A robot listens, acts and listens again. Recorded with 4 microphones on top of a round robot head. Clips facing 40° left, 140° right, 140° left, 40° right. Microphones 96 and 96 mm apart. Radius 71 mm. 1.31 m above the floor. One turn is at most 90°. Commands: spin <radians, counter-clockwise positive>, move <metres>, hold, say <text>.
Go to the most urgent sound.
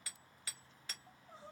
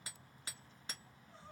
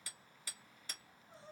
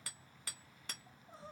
spin -0.70
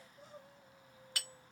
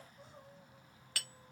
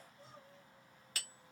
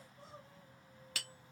move 1.0
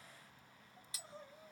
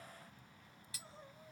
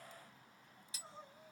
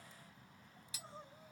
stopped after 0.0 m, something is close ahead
say Something is in my way. I am facing the crying but have not reached it.